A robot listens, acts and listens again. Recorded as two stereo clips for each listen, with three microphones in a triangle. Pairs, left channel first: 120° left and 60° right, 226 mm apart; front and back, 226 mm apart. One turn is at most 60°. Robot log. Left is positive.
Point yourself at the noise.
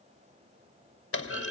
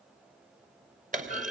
note: The clunk: 125° left.
cmd yaw +60
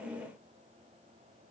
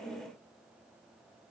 note: Nothing new. It was at 65° left.
cmd yaw +60
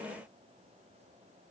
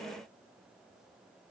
end: I heard a clunk from this way, but can't make it out now.